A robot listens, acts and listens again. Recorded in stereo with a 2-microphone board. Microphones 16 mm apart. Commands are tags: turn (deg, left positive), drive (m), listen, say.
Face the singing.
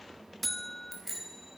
<listen/>
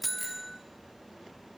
<listen/>
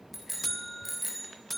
<say>I can't make out singing to turn to.</say>